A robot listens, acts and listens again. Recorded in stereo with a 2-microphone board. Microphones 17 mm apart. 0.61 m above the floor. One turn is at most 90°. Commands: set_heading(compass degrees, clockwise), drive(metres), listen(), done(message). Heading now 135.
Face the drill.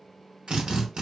set_heading(205)
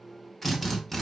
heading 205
done("Facing the drill, under 1 m away.")